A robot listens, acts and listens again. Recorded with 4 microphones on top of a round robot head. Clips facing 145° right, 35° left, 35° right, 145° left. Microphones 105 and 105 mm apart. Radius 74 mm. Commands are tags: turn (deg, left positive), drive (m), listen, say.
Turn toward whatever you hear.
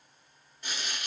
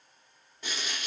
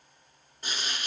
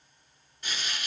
<turn deg="25"/>
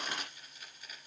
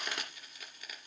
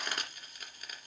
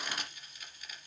<say>Facing the frying.</say>